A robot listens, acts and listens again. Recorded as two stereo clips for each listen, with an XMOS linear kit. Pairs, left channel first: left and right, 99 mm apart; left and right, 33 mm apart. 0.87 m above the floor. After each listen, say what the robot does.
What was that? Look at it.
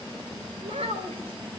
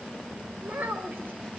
Turn 90° right.
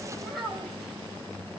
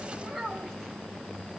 Facing the child speaking, 2 to 4 m away.